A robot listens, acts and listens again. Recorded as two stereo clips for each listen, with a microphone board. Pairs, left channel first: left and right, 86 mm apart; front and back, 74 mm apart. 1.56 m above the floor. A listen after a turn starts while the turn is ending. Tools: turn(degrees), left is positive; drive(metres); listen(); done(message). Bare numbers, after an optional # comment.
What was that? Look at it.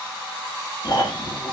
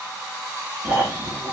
# The snoring: 115° left.
turn(115)
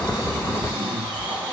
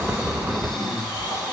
# The snoring is now 15° right.
turn(-15)
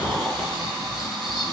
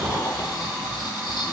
done("Found it: snoring, straight ahead.")